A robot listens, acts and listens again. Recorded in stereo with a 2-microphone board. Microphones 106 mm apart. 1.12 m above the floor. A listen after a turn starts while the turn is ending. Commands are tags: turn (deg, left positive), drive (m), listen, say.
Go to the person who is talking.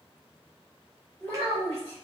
<turn deg="25"/>
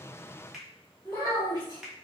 <turn deg="130"/>
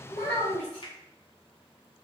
<drive m="1.0"/>
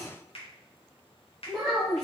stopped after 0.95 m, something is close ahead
<say>Arrived at the child speaking, straight ahead.</say>